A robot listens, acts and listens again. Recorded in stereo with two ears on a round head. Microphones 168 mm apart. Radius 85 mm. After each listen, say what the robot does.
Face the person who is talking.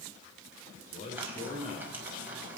Turn 35° left.
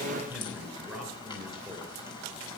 Facing the man speaking, over 4 m away.